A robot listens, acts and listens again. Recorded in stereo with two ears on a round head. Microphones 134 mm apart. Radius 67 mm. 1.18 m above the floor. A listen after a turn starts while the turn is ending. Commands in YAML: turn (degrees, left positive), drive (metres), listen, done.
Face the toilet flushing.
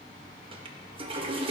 turn: -40
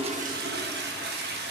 turn: -95
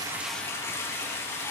turn: 20
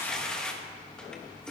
done: "Facing the toilet flushing, 1 to 2 m away."